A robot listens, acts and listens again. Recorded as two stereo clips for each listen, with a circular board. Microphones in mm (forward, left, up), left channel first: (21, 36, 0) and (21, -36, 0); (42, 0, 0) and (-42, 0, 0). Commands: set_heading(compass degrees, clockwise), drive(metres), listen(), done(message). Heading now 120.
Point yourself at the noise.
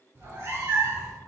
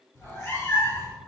set_heading(180)
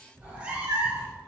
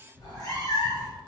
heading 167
set_heading(202)
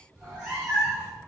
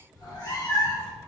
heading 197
set_heading(222)
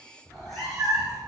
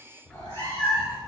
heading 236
done("Found it: a cat meowing, straight ahead.")